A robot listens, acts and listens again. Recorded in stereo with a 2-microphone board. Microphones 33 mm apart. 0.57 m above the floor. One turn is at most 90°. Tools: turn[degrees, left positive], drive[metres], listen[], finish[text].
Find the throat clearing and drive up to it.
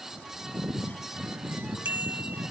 Action: listen[]
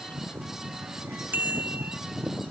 Action: listen[]
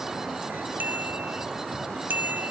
Action: finish[I can't make out throat clearing, only a bicycle bell.]